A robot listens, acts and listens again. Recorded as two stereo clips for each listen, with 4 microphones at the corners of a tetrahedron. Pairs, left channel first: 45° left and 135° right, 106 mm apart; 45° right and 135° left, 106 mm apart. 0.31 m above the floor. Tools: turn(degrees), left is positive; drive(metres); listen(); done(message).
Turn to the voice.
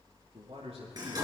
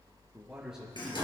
turn(degrees=-140)
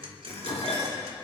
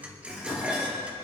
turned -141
listen()
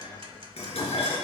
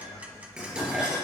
listen()
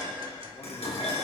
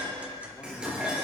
done("I heard a man speaking from this way, but can't make it out now.")